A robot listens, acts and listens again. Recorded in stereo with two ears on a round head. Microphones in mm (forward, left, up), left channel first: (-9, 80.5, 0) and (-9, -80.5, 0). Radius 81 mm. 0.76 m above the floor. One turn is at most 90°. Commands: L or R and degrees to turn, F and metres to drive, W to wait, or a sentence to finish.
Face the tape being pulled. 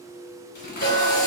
L55
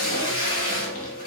L55
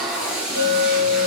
Found it: tape being pulled, straight ahead.